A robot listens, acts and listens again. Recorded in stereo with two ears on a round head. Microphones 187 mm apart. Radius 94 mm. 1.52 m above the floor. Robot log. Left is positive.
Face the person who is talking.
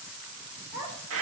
cmd yaw -30
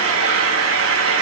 cmd idle
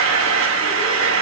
cmd idle
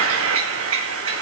end: I heard a child speaking, but can't make it out now. It was about 20° left or 140° right.